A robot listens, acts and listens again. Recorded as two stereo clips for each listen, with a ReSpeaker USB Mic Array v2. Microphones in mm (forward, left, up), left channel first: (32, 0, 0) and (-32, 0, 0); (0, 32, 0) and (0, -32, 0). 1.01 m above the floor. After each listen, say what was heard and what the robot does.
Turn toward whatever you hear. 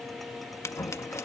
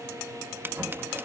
The scissors: 40° right. Turn 40° right.
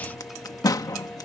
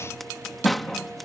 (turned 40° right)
Facing the scissors.